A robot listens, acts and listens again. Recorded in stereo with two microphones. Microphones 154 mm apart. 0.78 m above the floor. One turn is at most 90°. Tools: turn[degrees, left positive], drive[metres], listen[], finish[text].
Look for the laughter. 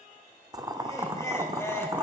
Thought: The laughter: about 15° left or 165° left.
Action: turn[15]
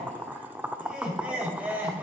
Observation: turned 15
Action: turn[-30]
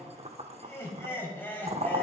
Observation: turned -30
Thought: So it is at 15° left.
Action: turn[15]
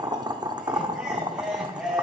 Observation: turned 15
Action: finish[Facing the laughter, over 4 m away.]